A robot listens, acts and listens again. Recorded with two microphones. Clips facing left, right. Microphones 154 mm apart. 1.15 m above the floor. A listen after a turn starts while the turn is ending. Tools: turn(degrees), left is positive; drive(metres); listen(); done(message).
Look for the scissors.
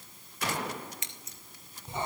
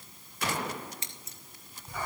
turn(degrees=-35)
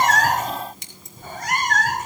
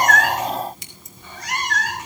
done("Found it: scissors, straight ahead, 2 to 4 m away.")